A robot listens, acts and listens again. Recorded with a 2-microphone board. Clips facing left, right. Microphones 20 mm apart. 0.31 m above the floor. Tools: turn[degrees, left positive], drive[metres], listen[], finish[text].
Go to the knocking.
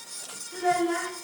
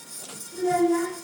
Action: listen[]
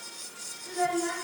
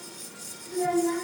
Action: listen[]
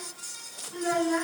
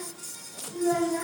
Action: finish[I can't make out knocking, only a child speaking.]